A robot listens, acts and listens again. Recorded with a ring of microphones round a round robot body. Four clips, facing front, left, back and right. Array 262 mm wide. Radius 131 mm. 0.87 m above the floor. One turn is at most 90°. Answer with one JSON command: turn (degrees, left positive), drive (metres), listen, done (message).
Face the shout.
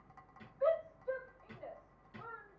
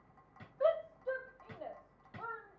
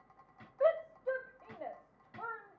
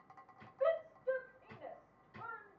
{"turn": 90}
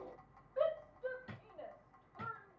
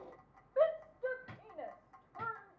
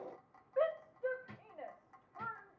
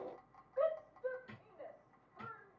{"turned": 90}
{"turn": 90}
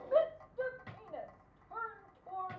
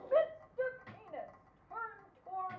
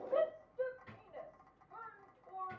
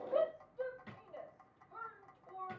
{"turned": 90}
{"turn": 45}
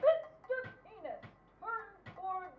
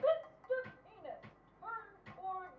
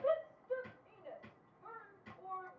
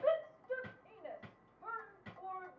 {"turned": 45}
{"turn": 10}
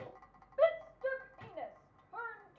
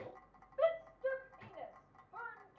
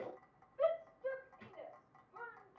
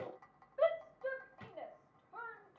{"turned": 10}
{"done": "Found it: a shout, straight ahead, under 1 m away."}